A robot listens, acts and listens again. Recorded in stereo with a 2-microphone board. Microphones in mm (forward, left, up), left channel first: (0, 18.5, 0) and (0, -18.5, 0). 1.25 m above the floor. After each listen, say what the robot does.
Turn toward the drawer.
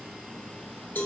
Keep listening.
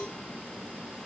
Keep listening.
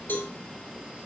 I can't make out a drawer, only a cowbell.